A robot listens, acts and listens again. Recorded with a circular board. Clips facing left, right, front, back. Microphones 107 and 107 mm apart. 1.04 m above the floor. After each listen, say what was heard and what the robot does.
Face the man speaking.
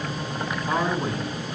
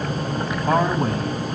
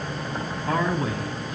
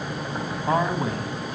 The man speaking: 125° right. Turn 125° right.
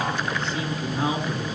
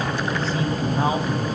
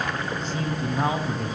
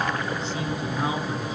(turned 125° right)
The man speaking is now 45° right. Turn 45° right.
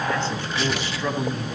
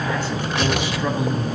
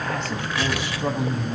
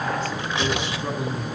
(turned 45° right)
The man speaking is now 15° right. Turn 15° right.
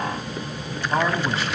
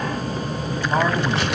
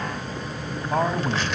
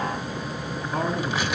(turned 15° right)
The man speaking is now 10° right. Turn 10° right.
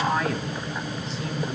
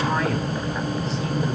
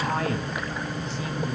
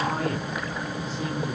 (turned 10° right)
Facing the man speaking.